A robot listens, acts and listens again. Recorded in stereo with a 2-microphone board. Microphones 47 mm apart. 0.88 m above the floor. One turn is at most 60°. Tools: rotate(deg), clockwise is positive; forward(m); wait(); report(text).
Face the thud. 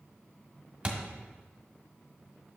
rotate(30)
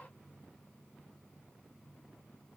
wait()
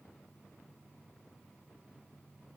report("I heard a thud, but can't make it out now. It was about straight ahead or 120° right.")